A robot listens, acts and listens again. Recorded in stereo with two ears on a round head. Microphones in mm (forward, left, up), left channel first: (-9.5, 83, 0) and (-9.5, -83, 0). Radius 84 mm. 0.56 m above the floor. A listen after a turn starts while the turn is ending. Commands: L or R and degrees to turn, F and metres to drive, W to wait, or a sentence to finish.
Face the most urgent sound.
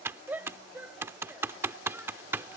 R30
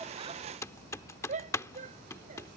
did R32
R135
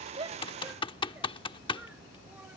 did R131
W
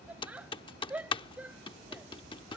Facing the shout.